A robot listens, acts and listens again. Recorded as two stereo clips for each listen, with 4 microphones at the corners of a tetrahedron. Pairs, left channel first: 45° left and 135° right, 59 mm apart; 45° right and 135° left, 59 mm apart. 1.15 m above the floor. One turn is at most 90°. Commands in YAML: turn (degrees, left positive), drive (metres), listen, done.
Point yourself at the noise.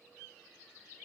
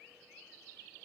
listen: true
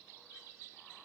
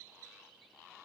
listen: true
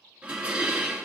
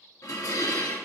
turn: -65
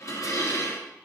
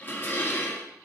turn: 10
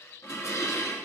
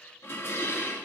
done: "Found it: dishes clattering, straight ahead, 1 to 2 m away."